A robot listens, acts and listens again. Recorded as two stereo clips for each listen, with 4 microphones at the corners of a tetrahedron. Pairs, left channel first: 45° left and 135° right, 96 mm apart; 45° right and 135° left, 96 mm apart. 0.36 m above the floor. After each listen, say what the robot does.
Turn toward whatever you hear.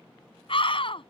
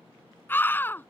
Turn 25° left.
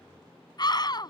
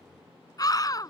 Found it: a scream, straight ahead.